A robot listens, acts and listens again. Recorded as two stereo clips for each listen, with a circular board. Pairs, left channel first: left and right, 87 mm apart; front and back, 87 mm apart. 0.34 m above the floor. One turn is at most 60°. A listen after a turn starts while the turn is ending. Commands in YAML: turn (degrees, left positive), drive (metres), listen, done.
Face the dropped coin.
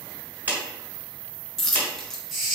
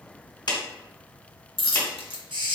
done: "Facing the dropped coin."